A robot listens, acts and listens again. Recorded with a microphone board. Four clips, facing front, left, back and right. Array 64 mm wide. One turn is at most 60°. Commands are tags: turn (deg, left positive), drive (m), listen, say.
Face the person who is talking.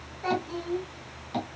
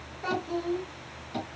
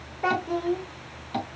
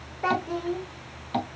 <turn deg="-60"/>
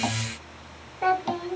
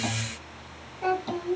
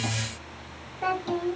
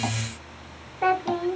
<turn deg="-60"/>
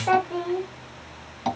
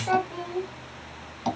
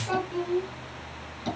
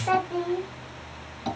<turn deg="-15"/>
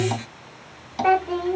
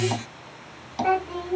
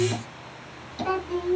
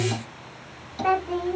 <say>Found it: a child speaking, straight ahead, 1 to 2 m away.</say>